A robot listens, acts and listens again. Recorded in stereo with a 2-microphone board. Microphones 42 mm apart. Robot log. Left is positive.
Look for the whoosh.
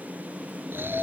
cmd idle
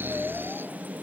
cmd idle
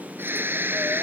end: I can't make out a whoosh to turn to.